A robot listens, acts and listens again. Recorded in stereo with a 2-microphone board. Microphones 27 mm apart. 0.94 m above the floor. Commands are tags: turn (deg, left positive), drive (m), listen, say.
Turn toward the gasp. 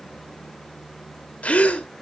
<turn deg="50"/>
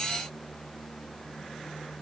<listen/>
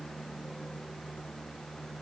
<say>I heard a gasp, but can't make it out now. It was about straight ahead or 80° left.</say>